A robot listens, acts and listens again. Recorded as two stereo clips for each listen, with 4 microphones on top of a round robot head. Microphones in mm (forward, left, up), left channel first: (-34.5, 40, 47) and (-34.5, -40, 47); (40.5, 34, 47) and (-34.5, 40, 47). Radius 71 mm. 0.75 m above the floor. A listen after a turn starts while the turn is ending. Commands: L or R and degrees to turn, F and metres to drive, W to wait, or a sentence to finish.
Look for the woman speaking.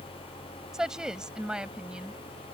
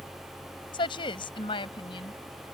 R10
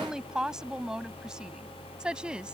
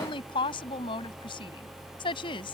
R10
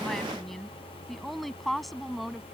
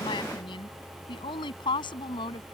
Facing the woman speaking.